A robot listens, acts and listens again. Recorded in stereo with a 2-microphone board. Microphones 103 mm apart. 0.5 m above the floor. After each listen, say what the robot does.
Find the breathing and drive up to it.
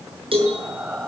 Turn 30° right.
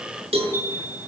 Keep listening.
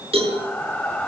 Turn 15° left.
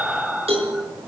Drive 1.0 m forward.
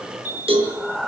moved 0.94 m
Drive 1.0 m forward.
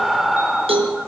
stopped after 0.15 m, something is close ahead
I am next to the breathing.